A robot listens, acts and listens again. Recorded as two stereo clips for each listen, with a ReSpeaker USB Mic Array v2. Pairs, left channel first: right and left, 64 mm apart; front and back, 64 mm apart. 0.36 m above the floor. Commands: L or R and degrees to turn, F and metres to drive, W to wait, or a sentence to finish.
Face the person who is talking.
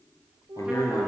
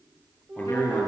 R60
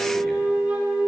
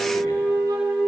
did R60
W
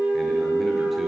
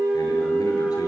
W
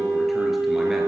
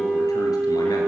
Facing where the man speaking came from. I can't hear it now.